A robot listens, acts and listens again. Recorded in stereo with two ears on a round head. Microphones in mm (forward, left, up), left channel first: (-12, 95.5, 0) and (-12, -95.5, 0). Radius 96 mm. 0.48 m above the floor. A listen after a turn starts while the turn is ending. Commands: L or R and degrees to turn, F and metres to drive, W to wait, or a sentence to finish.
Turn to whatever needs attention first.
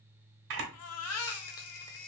L90
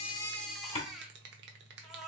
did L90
Found it: a baby crying, straight ahead.